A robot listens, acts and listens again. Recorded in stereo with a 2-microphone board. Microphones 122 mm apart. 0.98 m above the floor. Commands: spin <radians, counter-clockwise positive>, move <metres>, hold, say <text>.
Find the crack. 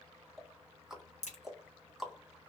spin 1.22
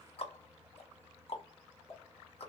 hold
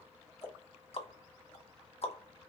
say I heard a crack, but can't make it out now. It was about straight ahead or 40° left.